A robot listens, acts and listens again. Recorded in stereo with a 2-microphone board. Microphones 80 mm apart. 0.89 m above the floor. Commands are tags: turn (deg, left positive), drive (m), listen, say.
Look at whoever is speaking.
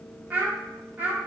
<turn deg="-20"/>
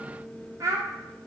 <turn deg="-140"/>
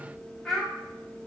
<say>Facing the child speaking.</say>